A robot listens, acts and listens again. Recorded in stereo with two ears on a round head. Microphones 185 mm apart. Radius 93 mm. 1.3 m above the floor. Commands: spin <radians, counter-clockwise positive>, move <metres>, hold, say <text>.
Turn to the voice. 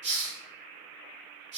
hold
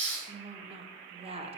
spin -0.52
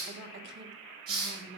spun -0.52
spin -2.09
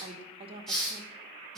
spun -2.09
spin -0.44
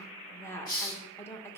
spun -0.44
spin 0.17
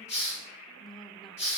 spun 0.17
say Found it: a woman speaking, straight ahead.